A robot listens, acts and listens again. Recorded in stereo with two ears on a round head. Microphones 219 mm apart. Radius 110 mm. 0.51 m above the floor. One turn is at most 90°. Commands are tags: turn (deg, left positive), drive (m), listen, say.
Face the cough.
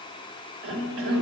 <turn deg="-60"/>
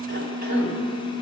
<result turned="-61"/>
<turn deg="-45"/>
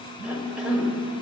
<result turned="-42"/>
<say>Facing the cough.</say>